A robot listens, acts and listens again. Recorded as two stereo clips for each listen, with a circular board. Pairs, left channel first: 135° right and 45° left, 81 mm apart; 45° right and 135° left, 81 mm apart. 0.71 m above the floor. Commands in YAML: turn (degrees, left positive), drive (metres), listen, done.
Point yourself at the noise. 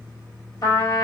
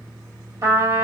turn: -175
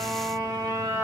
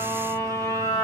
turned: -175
done: "Facing the trumpet."